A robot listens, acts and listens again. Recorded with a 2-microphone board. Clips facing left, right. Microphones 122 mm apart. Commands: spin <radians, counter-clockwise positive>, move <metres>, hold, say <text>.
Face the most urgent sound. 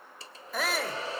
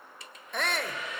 spin 0.52
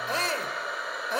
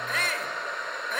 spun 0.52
spin 2.53
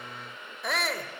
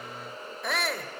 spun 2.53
say Found it: a shout, straight ahead, 1 to 2 m away.